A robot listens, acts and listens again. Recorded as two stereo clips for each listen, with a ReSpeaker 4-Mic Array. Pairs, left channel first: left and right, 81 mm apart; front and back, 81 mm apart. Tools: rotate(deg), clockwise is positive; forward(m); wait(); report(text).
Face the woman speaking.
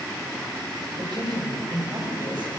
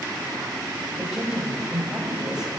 rotate(100)
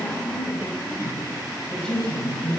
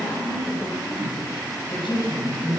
rotate(-10)
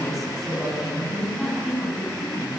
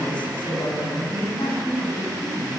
report("Found it: a woman speaking, straight ahead.")